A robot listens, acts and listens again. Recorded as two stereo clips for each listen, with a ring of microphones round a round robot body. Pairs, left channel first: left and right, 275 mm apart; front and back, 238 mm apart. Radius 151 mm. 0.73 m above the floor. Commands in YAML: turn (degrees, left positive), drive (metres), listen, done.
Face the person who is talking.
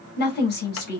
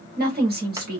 turn: 140
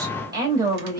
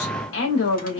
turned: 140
turn: -15
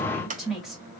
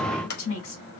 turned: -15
done: "Facing the woman speaking, 1 to 2 m away."